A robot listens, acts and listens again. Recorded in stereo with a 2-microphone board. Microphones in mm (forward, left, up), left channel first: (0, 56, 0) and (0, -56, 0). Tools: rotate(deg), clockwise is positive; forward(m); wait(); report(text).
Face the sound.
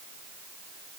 wait()
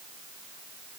wait()
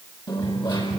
rotate(-40)
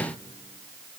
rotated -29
wait()
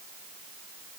report("I heard a dropped coin, but can't make it out now. It was about 10° left or 115° left.")